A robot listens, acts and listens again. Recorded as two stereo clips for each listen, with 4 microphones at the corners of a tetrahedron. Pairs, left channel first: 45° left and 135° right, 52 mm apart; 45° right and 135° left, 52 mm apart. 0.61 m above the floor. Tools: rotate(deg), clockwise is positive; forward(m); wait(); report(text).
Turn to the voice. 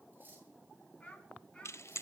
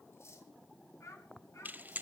rotate(20)
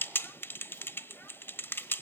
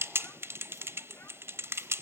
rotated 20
wait()
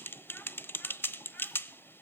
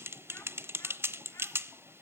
wait()
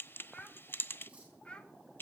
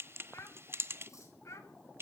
rotate(25)
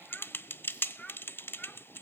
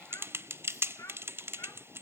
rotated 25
rotate(25)
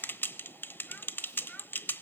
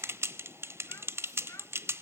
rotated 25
wait()
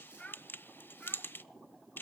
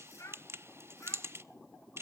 rotate(20)
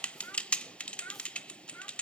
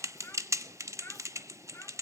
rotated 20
report("Found it: a child speaking, straight ahead.")